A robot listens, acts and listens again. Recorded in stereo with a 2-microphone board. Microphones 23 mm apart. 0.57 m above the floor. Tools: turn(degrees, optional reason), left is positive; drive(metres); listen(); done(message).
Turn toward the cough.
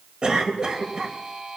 turn(degrees=-40, reason="The cough: about 40° right or 140° right.")
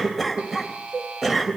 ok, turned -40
done("Facing the cough.")